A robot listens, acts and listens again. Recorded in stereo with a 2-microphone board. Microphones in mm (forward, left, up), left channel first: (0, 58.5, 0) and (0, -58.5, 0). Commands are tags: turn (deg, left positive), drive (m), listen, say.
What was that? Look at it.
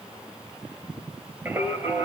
<turn deg="-20"/>
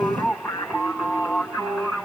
<turn deg="-30"/>
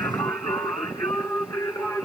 <turn deg="25"/>
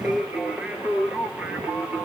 <turn deg="-15"/>
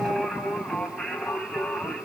<say>Facing the singing.</say>